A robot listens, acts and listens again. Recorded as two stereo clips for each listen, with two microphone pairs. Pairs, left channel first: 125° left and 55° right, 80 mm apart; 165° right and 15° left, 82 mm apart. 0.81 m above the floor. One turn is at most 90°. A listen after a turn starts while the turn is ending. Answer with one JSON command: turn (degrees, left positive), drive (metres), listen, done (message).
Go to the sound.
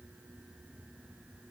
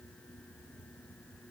{"listen": true}
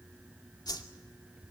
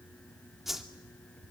{"turn": 90}
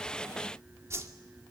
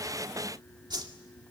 {"drive": 1.0}
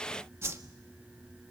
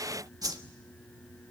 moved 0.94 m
{"turn": -10}
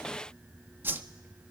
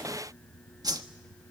{"drive": 1.0}
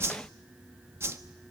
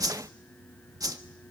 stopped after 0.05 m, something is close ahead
{"turn": -10}
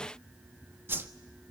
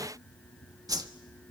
{"done": "Arrived at the whoosh, straight ahead."}